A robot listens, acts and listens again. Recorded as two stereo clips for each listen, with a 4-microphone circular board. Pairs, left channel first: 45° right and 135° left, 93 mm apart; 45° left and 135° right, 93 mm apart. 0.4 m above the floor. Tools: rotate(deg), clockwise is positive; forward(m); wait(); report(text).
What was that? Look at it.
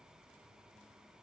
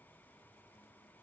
wait()
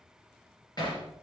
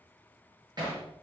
rotate(90)
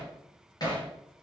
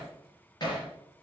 report("Facing the hammering, over 4 m away.")